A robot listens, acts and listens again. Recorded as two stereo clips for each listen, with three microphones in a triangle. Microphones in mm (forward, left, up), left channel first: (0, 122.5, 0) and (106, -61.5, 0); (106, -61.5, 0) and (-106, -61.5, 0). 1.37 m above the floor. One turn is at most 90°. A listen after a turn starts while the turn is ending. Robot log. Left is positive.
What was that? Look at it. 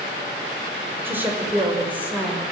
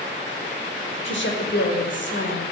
note: The woman speaking: 25° left.
cmd yaw +25
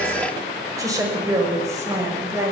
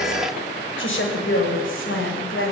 note: The woman speaking is now 15° left.
cmd yaw +15
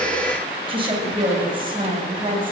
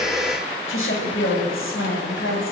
end: Found it: a woman speaking, straight ahead, over 4 m away.